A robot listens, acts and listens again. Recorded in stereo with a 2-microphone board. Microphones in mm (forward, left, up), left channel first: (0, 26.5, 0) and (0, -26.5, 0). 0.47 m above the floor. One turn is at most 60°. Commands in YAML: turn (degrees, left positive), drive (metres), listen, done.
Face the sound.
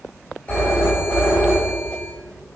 turn: 30
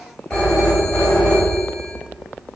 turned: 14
turn: 20
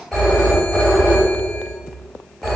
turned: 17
done: "Found it: a phone ringing, straight ahead, 1 to 2 m away."